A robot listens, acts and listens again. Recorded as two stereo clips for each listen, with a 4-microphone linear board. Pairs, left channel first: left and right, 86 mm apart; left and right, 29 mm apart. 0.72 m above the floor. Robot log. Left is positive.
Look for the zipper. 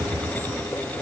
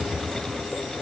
cmd idle
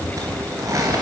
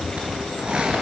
note: The zipper: about 35° right or 145° right.
cmd yaw -35
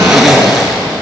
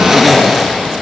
end: Found it: a zipper, straight ahead.